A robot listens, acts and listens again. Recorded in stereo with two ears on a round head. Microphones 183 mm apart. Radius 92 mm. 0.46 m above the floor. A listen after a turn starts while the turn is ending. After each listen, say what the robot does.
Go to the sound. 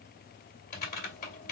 Turn 45° left.
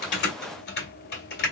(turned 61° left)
Turn 65° left.
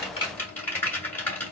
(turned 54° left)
Turn 10° left.
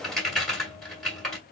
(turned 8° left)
Drive 1.0 m forward.
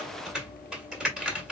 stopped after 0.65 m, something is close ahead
I am next to the typing on a keyboard.